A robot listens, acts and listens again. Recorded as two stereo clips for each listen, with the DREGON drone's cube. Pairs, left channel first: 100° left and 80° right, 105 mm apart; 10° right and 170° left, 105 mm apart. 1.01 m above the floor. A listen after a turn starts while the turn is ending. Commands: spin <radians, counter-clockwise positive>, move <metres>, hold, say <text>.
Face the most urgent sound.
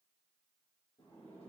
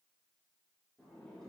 hold
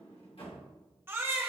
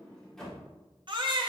spin -2.53
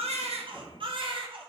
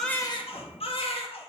spin -0.70
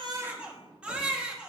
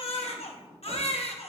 say Found it: a baby crying, straight ahead.